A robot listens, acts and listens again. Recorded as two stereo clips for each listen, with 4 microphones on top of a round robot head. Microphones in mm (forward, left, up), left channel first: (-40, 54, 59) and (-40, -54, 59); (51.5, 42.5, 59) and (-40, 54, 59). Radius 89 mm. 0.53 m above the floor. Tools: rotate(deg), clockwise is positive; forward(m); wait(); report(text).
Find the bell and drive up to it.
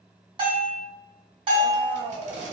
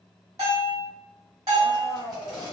rotate(130)
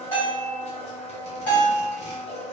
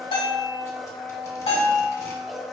rotate(-15)
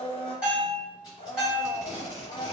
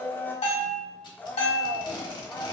forward(1.0)
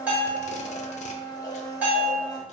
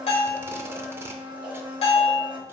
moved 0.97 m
rotate(10)
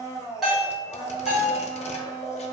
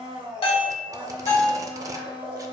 forward(1.0)
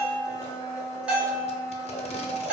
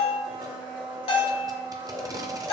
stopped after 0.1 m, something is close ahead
rotate(10)
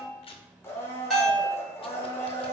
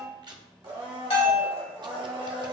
report("Arrived at the bell, straight ahead.")